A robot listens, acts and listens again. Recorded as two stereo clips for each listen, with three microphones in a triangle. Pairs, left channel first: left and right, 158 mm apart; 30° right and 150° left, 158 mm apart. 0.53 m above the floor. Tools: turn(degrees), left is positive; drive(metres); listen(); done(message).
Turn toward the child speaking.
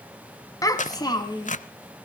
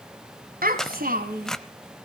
turn(degrees=150)
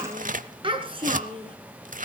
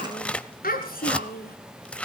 turn(degrees=-35)
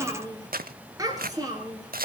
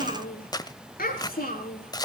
turn(degrees=-25)
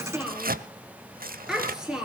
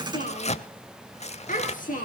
done("Facing the child speaking.")